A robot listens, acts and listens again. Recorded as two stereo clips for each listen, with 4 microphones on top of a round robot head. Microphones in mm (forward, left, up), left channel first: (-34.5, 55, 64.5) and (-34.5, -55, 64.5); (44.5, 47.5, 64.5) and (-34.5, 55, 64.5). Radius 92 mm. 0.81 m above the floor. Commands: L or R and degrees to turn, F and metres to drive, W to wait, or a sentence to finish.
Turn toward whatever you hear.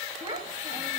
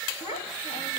R30
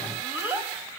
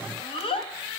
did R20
R15
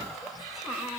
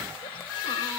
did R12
W
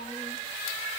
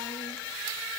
W
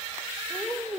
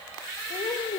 Found it: a child speaking, straight ahead.